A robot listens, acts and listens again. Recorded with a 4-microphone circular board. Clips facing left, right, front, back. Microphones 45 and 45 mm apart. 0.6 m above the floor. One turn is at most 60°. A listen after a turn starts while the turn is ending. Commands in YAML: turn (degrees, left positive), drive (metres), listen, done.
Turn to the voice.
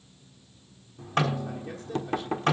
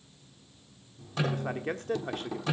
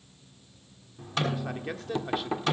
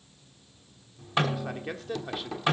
turn: -60
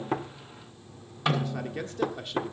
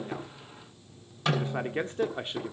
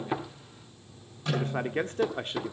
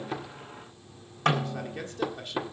turn: -35
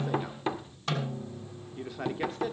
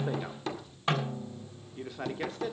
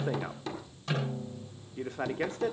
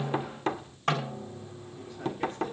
done: "Found it: a man speaking, straight ahead, 1 to 2 m away."